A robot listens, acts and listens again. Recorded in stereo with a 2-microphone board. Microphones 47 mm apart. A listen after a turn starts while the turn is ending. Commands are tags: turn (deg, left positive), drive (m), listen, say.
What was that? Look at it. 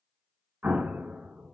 <turn deg="-35"/>
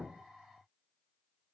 <listen/>
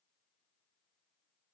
<say>I heard an explosion, but can't make it out now. It was about straight ahead or 110° right.</say>